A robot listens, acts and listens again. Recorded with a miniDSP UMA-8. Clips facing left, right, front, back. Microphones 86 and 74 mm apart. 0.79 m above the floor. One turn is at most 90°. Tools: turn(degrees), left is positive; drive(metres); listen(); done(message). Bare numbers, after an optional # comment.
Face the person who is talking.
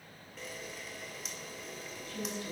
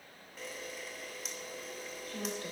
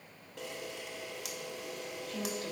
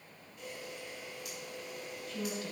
# The woman speaking: 45° right.
turn(-45)
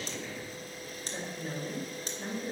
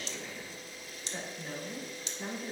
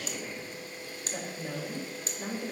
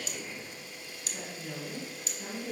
done("Found it: a woman speaking, straight ahead, 2 to 4 m away.")